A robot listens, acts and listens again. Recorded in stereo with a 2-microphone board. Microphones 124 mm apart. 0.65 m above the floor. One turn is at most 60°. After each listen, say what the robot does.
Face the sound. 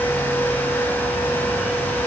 Keep listening.
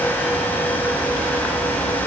Keep listening.
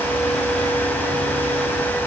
I can't make out anything.